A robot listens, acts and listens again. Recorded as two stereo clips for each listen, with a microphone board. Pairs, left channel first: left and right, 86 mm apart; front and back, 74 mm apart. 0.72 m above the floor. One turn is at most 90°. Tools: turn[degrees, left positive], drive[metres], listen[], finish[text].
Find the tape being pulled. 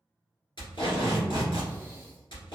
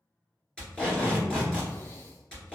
Thought: The tape being pulled: 75° left.
Action: turn[75]
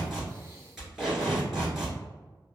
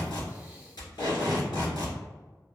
Action: finish[Found it: tape being pulled, straight ahead, 2 to 4 m away.]